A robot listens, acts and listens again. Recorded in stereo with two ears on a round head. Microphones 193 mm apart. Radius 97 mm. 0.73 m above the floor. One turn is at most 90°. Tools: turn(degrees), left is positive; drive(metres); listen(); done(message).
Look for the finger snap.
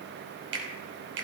turn(degrees=-55)
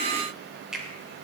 done("Facing the finger snap.")